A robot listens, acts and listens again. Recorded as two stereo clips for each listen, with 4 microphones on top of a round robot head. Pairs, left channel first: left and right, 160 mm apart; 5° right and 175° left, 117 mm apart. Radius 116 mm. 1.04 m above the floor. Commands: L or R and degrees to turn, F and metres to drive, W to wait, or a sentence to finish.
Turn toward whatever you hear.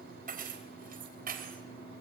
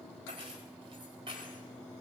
R120
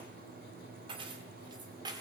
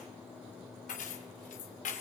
R20
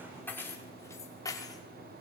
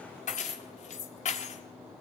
L20
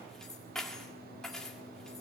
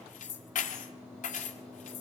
Facing the keys jangling, 1 to 2 m away.